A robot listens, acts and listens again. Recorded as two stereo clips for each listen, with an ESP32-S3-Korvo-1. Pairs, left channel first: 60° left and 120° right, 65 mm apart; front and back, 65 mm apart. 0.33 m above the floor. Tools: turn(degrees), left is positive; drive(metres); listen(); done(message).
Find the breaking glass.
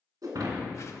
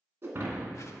turn(degrees=-130)
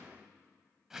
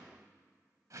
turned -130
done("I heard breaking glass from this way, but can't make it out now.")